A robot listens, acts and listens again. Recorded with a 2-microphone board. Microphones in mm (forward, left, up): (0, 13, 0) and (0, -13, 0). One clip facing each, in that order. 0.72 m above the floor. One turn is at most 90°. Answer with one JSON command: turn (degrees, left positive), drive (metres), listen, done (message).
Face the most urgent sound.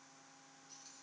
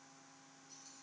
{"listen": true}
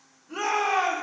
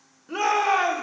{"turn": -65}
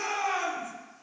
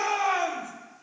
{"turn": -20}
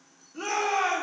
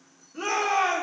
{"done": "Facing the shout."}